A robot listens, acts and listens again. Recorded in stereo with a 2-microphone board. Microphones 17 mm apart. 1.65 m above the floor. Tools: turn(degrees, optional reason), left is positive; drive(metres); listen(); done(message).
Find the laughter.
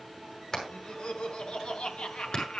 turn(degrees=70, reason="The laughter: about 70° left or 110° left.")
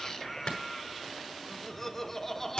turn(degrees=15, reason="So it is at 15° left.")
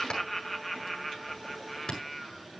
done("Facing the laughter, 1 to 2 m away.")